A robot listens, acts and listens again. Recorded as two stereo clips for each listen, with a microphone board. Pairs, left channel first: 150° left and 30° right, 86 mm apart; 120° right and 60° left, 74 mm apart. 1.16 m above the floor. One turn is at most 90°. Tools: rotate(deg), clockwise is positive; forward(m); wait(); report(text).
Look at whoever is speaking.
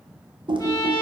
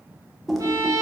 wait()
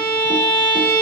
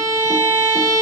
wait()
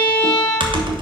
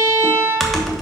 report("I can't make out anyone speaking to turn to.")